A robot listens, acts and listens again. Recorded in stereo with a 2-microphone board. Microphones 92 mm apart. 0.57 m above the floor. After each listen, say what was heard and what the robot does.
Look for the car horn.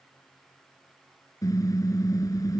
The car horn: about 40° left or 140° left. Turn 40° left.
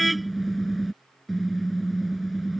Found it: a car horn, straight ahead.